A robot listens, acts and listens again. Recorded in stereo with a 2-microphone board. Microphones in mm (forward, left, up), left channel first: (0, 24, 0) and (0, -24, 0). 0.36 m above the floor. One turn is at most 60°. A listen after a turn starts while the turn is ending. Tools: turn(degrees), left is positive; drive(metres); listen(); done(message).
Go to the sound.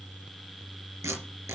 turn(degrees=-60)
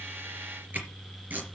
turn(degrees=-35)
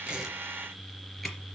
listen()
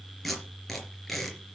drive(metres=1.0)
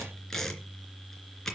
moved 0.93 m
turn(degrees=10)
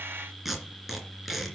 drive(metres=1.0)
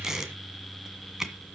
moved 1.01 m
turn(degrees=-10)
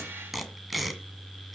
drive(metres=1.0)
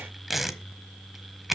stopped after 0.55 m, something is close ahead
done("I am next to the tape being pulled.")